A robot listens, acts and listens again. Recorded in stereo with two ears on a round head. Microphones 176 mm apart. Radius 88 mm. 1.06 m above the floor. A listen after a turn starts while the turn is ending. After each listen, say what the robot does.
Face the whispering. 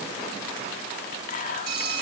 Turn 40° left.
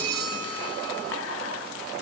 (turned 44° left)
Keep listening.
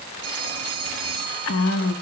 Turn 95° left.
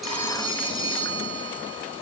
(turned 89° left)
Keep listening.
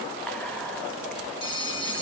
Keep listening.
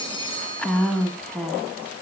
Found it: whispering, straight ahead.